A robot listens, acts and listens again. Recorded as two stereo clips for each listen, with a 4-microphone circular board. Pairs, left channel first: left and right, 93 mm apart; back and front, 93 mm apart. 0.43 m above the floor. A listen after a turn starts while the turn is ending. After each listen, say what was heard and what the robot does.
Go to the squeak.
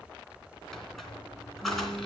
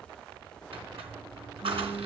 Drive 1.0 m forward.
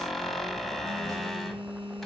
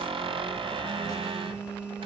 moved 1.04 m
Drive 1.0 m forward.
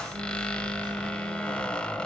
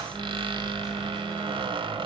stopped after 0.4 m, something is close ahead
The squeak is now 10° left. Turn 10° left.
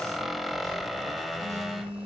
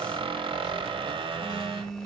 I am next to the squeak.